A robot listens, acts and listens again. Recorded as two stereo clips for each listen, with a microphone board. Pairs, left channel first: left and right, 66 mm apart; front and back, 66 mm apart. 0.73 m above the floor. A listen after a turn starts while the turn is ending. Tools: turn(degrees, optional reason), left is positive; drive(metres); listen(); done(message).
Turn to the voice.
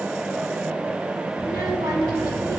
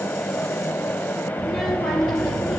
turn(degrees=-85, reason="The child speaking: 85° right.")
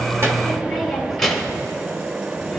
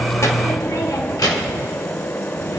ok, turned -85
done("Facing the child speaking.")